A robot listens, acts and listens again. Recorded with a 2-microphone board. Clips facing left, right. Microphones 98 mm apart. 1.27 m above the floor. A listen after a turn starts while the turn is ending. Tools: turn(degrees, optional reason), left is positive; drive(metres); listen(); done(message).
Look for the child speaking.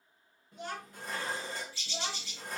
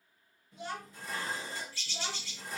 turn(degrees=55, reason="The child speaking: about 55° left or 125° left.")
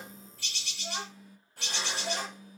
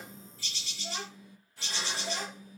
turn(degrees=55, reason="So it is at 55° left.")
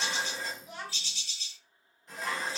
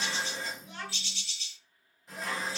turn(degrees=10, reason="The child speaking is now 10° left.")
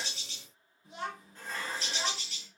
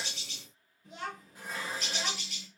done("Found it: a child speaking, straight ahead.")